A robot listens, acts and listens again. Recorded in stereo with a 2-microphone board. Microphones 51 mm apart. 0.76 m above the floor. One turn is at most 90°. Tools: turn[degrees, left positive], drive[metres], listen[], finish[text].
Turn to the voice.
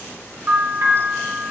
Action: listen[]
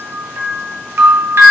Action: listen[]
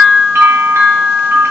Action: finish[I can't make out anyone speaking, only a bell.]